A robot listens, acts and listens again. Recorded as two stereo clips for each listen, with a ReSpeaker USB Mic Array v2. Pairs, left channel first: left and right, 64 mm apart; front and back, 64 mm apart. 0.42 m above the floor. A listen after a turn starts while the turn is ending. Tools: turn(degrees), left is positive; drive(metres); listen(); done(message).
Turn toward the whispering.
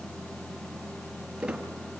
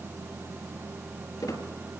listen()
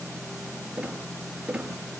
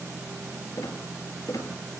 listen()
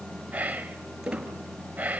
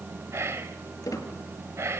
turn(degrees=-150)
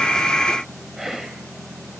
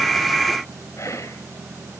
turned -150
listen()
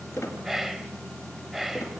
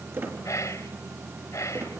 done("Found it: whispering, straight ahead, 2 to 4 m away.")